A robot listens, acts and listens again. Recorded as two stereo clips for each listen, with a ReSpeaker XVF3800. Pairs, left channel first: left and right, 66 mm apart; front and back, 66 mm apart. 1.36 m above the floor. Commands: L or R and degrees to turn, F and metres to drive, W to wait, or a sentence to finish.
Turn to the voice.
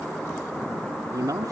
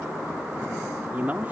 R115
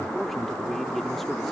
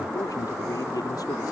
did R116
Facing the man speaking.